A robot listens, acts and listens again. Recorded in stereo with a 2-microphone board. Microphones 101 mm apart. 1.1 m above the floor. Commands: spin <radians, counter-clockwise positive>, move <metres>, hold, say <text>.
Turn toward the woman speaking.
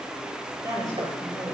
spin -0.61
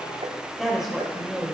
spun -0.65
say Found it: a woman speaking, straight ahead, over 4 m away.